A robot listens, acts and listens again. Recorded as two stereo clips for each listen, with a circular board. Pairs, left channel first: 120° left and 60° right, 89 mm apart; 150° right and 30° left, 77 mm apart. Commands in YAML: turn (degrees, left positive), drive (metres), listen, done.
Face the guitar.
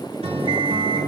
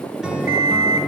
turn: -50
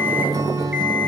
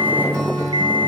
turn: -10
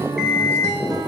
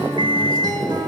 done: "Facing the guitar."